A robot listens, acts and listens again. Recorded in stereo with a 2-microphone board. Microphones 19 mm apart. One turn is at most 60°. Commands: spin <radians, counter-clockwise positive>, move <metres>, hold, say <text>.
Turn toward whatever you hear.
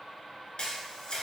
spin 0.96
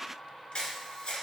spin 1.05
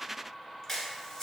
spin 0.35
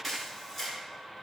say Facing the camera shutter, 1 to 2 m away.